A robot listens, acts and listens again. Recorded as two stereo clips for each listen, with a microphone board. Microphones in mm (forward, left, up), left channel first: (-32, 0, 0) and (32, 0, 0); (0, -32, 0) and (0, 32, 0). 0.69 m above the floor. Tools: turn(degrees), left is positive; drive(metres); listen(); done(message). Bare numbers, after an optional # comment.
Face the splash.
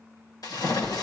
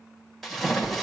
# The splash: 175° right.
turn(-175)
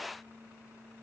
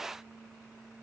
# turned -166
# Nothing new. It was at 10° right.
turn(-10)
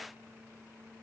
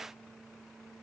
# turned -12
done("Facing where the splash came from. I can't hear it now.")